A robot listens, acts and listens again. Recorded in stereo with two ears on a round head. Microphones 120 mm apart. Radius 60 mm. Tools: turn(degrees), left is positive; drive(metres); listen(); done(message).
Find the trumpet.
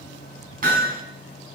listen()
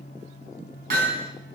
listen()
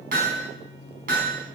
done("I can't make out a trumpet, only hammering.")